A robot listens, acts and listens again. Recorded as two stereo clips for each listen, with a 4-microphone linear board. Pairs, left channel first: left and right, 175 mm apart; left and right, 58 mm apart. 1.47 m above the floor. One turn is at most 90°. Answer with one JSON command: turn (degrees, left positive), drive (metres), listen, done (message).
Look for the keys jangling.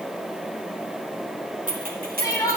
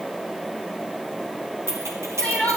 {"turn": -55}
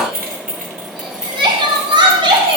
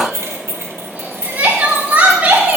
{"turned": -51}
{"turn": -45}
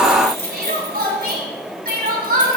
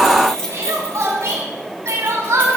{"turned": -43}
{"turn": 15}
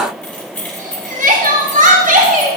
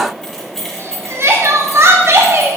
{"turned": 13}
{"turn": 10}
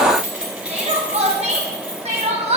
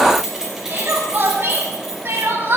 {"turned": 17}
{"done": "Found it: keys jangling, straight ahead."}